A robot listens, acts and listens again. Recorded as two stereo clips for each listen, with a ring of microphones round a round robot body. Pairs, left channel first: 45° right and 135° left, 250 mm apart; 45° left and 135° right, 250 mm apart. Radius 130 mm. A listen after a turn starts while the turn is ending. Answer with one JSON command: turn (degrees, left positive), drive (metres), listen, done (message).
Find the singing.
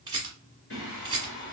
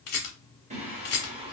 {"turn": -65}
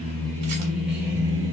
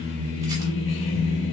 {"turn": 60}
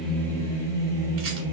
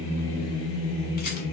{"turn": 40}
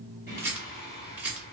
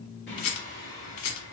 {"listen": true}
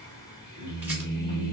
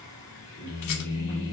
{"done": "Facing the singing."}